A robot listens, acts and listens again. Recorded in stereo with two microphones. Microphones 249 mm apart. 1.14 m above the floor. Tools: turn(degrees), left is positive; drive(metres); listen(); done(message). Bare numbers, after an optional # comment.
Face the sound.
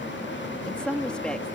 turn(30)
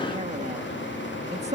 # So it is at 25° right.
turn(-25)
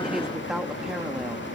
done("Found it: a woman speaking, straight ahead.")